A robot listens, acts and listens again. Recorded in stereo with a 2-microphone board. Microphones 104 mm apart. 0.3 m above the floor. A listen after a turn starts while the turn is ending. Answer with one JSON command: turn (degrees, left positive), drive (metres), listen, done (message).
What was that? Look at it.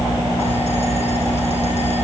{"listen": true}
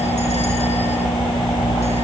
{"listen": true}
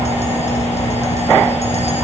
{"done": "I can't make out anything to turn to."}